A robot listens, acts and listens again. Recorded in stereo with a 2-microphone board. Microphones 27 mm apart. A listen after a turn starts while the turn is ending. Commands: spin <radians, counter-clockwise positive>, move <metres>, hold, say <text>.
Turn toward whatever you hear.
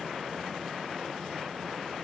hold
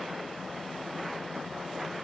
hold
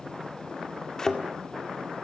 spin 0.44
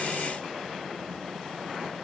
hold
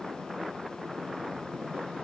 say I heard a thud, but can't make it out now. It was about straight ahead or 130° left.